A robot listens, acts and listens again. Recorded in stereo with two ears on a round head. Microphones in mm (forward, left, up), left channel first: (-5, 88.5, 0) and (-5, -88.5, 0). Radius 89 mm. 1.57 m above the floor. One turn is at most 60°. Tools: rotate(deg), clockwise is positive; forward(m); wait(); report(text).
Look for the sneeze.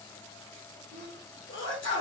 rotate(-60)
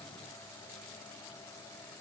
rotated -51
wait()
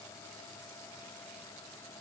report("I heard a sneeze, but can't make it out now. It was about 20° left or 60° left.")